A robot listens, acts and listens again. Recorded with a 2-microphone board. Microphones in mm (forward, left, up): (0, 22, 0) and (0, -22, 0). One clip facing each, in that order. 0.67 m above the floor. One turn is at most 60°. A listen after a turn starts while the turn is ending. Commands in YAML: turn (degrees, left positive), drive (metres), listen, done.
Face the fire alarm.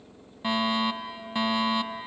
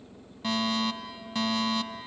turn: 20
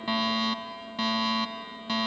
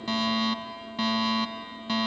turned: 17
done: "Found it: a fire alarm, straight ahead."